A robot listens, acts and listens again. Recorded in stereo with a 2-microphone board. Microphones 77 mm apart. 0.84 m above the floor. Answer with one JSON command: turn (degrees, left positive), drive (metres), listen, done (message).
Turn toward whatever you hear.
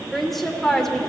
{"turn": 30}
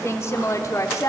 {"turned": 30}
{"turn": 135}
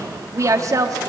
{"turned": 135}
{"turn": -50}
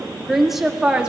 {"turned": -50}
{"turn": -10}
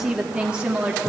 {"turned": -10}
{"turn": -10}
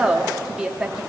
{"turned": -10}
{"done": "Facing the woman speaking, 1 to 2 m away."}